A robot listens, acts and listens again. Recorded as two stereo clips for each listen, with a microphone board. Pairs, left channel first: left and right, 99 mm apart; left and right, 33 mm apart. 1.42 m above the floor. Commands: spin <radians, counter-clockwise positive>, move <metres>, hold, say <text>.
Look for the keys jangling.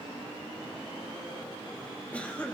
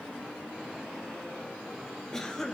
hold
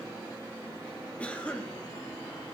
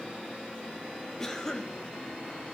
hold
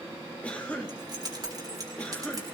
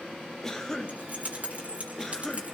spin -0.70
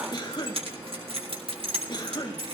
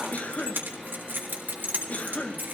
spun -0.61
spin -1.92
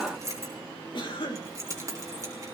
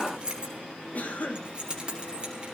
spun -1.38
spin -0.52
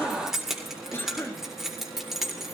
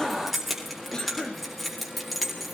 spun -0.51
say Facing the keys jangling, 2 to 4 m away.